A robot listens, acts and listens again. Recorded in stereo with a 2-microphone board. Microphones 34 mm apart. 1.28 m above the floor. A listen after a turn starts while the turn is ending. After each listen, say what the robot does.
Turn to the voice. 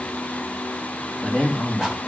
Turn 30° left.
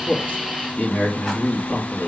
Turn 125° left.
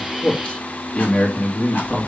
Turn 30° left.
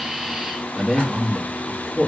Found it: a man speaking, straight ahead.